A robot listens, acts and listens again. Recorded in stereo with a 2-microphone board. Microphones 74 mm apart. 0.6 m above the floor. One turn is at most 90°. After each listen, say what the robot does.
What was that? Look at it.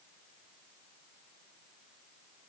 Keep listening.
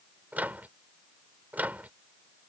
Turn 25° right.
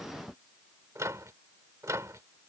Turn 90° right.
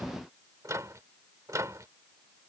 Turn 55° right.
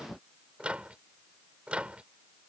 Turn 20° right.
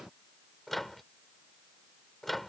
Facing the microwave.